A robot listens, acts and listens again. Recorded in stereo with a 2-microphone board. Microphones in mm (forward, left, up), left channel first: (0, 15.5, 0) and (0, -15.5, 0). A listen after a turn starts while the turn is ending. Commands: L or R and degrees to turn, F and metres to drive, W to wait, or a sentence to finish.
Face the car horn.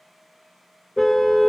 L30
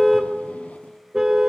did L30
R15
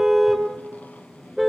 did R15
Found it: a car horn, straight ahead, 2 to 4 m away.